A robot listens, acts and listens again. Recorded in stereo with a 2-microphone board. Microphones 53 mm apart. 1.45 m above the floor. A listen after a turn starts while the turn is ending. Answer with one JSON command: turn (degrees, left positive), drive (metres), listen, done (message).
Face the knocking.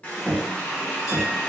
{"turn": 20}
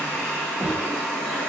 {"turn": 140}
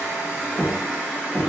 {"turn": -25}
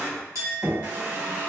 {"done": "Found it: knocking, straight ahead."}